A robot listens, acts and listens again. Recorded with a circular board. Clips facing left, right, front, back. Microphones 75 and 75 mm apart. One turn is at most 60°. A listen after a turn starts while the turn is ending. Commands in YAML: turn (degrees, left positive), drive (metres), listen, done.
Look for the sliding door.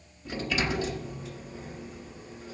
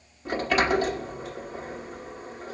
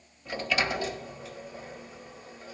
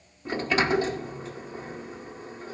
turn: -60
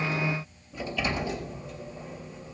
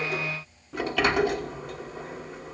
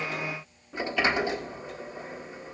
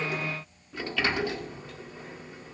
turn: -60
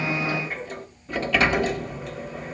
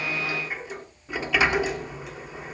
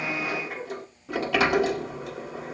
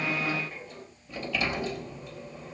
turn: -10
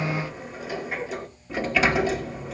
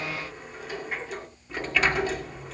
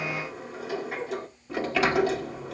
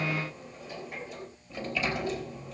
done: "Found it: a sliding door, straight ahead."